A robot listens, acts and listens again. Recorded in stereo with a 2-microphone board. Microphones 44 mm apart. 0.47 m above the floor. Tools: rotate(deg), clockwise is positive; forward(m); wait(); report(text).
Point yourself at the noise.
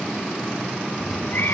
rotate(-50)
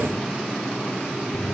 wait()
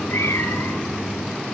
rotate(-80)
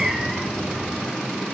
report("Found it: a cat meowing, straight ahead.")